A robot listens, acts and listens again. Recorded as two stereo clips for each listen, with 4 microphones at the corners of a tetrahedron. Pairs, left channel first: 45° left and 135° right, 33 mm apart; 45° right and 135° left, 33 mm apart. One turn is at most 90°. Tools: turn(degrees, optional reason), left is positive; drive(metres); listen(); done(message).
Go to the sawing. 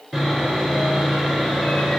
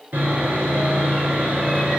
turn(degrees=90, reason="The sawing: 125° left.")
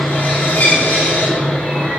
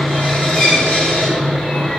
turn(degrees=10, reason="The sawing is now 10° left.")
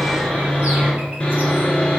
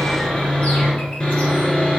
drive(metres=1.0)
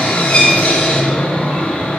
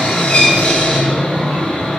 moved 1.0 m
drive(metres=1.0)
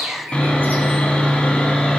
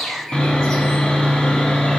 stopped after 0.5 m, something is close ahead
done("Arrived at the sawing, straight ahead.")